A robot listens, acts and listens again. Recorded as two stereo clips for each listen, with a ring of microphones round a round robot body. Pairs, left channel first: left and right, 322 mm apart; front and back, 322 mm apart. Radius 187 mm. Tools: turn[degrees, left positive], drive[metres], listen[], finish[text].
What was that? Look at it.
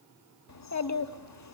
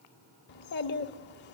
Thought: The child speaking: 55° left.
Action: turn[55]
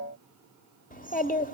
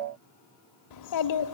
Thought: The child speaking is now 25° left.
Action: turn[25]
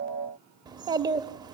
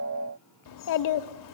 Thought: The child speaking is now 15° right.
Action: turn[-15]
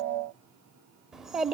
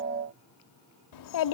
Action: finish[Found it: a child speaking, straight ahead.]